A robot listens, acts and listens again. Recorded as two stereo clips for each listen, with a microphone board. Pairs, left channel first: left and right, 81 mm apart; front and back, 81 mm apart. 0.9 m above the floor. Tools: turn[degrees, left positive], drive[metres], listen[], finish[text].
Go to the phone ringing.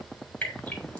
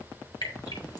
Action: listen[]
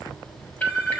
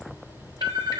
Thought: The phone ringing: 160° left.
Action: turn[160]
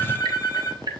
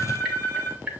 Thought: The phone ringing is now 35° left.
Action: turn[35]
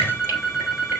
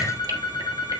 Action: drive[1.0]
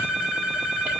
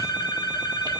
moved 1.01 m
Thought: The phone ringing is now 10° right.
Action: turn[-10]
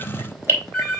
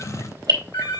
Action: drive[1.0]
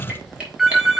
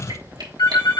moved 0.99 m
Action: drive[1.0]
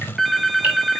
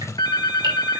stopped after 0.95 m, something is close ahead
Action: finish[Arrived at the phone ringing, straight ahead.]